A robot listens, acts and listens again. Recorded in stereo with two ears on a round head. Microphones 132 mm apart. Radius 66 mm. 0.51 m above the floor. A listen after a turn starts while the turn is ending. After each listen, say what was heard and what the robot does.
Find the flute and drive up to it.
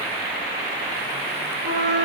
The flute: about 65° right or 115° right. Turn 65° right.
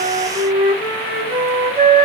So it is at 15° right. Turn 15° right.
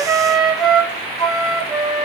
Drive 1.0 m forward.
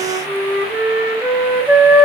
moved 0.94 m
The flute is now 10° right. Turn 10° right.
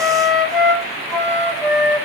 Drive 1.0 m forward.
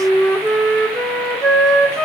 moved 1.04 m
Drive 1.0 m forward.
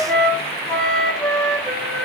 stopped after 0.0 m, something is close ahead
The flute is now 10° left. Turn 10° left.
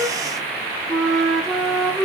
I am next to the flute.